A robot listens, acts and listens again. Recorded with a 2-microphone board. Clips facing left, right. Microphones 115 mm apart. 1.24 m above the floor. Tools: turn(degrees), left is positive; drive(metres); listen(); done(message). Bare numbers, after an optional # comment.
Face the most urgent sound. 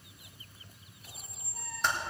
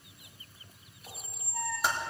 listen()
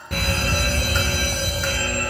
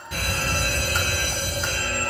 # The fire alarm: about 60° left or 120° left.
turn(60)
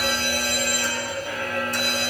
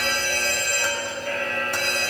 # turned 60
# So it is at 10° left.
turn(10)
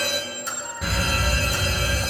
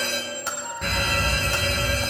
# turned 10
done("Found it: a fire alarm, straight ahead.")